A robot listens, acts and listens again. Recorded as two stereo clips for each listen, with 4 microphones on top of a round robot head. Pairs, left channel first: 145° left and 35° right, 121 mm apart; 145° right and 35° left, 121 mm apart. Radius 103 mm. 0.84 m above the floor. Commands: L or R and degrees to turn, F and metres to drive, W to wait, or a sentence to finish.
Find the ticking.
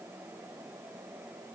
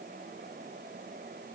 W
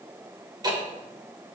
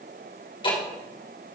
R95
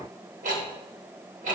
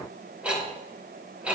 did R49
R45
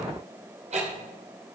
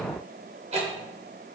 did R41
Found it: ticking, straight ahead.